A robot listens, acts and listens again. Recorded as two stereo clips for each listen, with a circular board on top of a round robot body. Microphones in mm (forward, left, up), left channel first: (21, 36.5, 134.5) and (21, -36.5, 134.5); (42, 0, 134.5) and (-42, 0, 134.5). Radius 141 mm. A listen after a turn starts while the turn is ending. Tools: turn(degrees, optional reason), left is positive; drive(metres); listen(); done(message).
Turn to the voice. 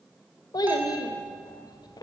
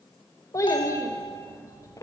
turn(degrees=55, reason="The child speaking: 55° left.")
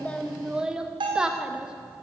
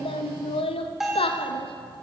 turn(degrees=-10, reason="The child speaking is now 10° right.")
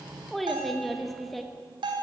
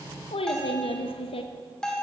done("Found it: a child speaking, straight ahead, under 1 m away.")